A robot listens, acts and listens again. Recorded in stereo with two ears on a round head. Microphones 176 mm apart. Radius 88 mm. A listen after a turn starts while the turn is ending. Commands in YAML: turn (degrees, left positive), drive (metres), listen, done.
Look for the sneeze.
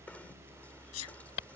turn: 90
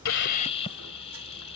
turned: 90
done: "I heard a sneeze from this way, but can't make it out now."